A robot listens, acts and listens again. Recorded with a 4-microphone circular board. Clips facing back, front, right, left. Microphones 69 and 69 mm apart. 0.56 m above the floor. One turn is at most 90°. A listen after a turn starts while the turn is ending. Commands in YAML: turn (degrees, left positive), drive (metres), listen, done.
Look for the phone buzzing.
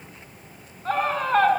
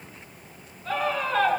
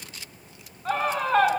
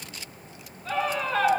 listen: true
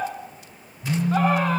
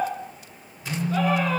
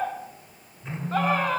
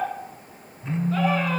turn: 90
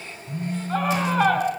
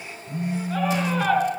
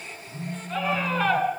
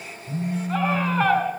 turn: 60
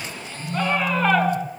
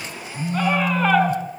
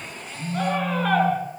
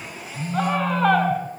done: "Found it: a phone buzzing, straight ahead."